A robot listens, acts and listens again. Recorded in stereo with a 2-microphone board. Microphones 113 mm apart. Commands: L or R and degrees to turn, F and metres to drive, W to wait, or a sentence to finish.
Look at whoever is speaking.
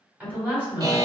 R15
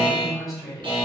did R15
Found it: a woman speaking, straight ahead, 1 to 2 m away.